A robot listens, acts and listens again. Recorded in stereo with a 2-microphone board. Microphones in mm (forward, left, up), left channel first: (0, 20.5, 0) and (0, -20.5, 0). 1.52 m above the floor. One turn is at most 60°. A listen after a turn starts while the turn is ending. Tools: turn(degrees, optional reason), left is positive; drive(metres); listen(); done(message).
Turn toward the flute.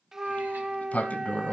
turn(degrees=-30)
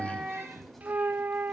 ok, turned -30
turn(degrees=-60, reason="So it is at 135° right.")
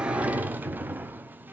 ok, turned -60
turn(degrees=-60, reason="Nothing new. It was at 75° right.")
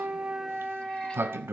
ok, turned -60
turn(degrees=-20, reason="The flute is now 20° right.")
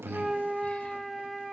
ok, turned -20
done("Facing the flute, under 1 m away.")